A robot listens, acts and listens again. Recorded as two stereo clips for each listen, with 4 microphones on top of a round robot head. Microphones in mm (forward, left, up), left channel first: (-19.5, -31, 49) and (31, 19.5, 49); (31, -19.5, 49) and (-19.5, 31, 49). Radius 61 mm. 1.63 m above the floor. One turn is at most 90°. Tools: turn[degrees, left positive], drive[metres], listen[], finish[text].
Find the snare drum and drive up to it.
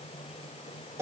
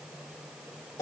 Action: listen[]
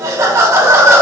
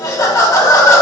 Action: listen[]
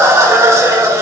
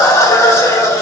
Action: finish[I can't make out a snare drum to turn to.]